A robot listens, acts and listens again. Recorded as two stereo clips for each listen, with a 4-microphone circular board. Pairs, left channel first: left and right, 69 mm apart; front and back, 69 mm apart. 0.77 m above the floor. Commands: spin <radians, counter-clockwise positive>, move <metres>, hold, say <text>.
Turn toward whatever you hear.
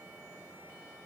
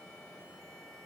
hold
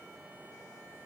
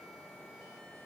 hold
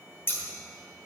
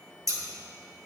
spin 2.53
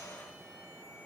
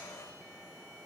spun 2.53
hold
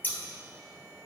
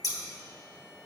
spin 0.44
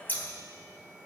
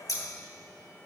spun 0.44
spin 0.52
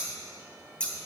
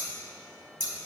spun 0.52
spin 0.26
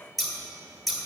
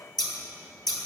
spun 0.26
say Found it: scissors, straight ahead.